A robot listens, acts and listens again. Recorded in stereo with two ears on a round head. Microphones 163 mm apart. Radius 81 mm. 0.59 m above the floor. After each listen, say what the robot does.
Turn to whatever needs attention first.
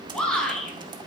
Turn 30° left.
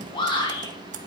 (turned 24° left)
Turn 150° left.
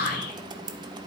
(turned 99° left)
Turn 55° left.
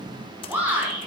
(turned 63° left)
Turn 10° right.
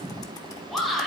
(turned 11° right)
Found it: a shout, straight ahead.